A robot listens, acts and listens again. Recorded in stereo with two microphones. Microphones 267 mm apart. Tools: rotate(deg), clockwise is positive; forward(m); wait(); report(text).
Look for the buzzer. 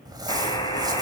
rotate(-20)
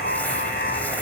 rotate(-140)
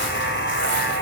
rotate(-45)
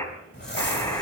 rotate(-10)
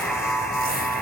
report("Found it: a buzzer, straight ahead, 2 to 4 m away.")